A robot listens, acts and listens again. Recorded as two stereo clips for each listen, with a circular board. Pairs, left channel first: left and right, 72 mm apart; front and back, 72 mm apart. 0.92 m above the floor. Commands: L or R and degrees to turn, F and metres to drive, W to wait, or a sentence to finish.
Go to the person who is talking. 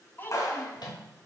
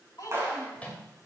L30
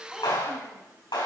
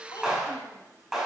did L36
W
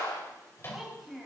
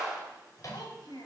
F1.0
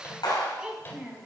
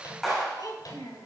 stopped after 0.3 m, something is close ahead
R15
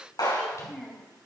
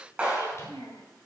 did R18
Blocked. The child speaking is further on, straight ahead.